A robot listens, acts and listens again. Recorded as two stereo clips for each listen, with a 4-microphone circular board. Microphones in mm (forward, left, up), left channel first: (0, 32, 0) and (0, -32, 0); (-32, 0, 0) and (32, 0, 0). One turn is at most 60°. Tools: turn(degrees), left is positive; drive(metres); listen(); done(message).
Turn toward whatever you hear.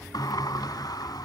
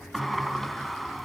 turn(degrees=60)
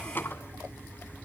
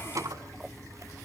turn(degrees=30)
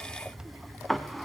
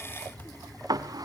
done("Facing the sliding door.")